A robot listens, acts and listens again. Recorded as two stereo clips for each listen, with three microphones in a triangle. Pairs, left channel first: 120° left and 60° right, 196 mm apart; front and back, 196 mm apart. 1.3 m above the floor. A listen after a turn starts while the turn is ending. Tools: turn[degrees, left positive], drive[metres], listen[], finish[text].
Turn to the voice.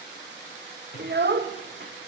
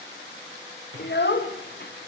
Thought: The child speaking: 30° right.
Action: turn[-30]
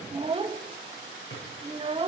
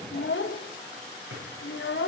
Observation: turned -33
Action: finish[Found it: a child speaking, straight ahead.]